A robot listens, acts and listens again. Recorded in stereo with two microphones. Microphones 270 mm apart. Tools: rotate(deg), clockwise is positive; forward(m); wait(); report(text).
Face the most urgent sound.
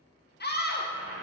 rotate(-40)
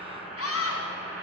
rotate(-95)
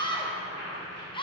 rotate(-20)
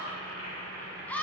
report("Facing the scream, under 1 m away.")